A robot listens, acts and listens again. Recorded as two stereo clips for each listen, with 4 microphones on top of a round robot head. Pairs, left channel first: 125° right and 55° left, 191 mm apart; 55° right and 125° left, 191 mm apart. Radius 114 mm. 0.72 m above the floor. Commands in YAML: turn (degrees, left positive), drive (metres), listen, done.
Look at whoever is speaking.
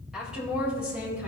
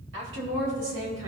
turn: 140
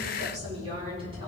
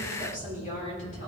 done: "Facing the woman speaking, over 4 m away."